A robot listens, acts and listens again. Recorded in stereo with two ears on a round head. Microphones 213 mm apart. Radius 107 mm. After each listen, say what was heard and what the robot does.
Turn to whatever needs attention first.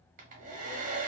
Keep listening.
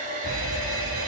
The fire alarm: about 60° right or 120° right. Turn 60° right.
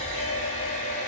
So it is at 55° right. Turn 55° right.
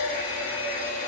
Keep listening.
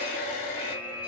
Found it: a fire alarm, straight ahead, 1 to 2 m away.